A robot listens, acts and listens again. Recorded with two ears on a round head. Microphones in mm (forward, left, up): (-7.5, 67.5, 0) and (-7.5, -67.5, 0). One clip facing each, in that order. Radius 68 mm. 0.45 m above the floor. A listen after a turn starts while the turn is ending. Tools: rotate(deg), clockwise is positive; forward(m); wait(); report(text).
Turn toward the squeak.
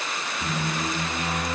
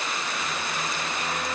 rotate(-90)
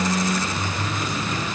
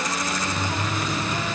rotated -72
report("Facing the squeak.")